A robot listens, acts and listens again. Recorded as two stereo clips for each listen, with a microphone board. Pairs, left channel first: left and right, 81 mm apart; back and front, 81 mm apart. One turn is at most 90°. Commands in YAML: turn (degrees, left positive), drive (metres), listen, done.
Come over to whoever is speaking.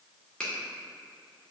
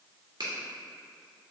listen: true
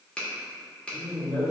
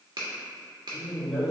turn: 80
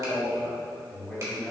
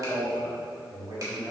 turn: 20
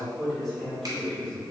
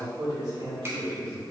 turn: 10
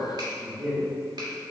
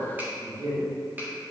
drive: 1.0
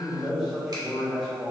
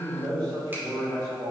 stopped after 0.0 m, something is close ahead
done: "Blocked. The man speaking is further on, straight ahead."